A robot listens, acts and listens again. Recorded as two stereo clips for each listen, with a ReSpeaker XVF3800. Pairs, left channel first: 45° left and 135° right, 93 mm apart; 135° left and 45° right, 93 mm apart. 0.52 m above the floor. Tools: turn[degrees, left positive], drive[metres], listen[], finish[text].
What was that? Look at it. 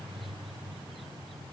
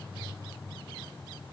Action: listen[]
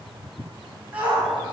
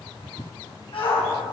Thought: The shout: 150° left.
Action: turn[150]
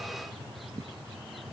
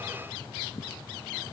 Action: listen[]
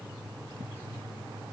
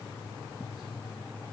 Action: listen[]
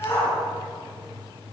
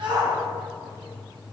Thought: The shout is now 20° right.
Action: turn[-20]
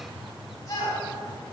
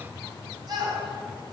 Action: finish[Found it: a shout, straight ahead, over 4 m away.]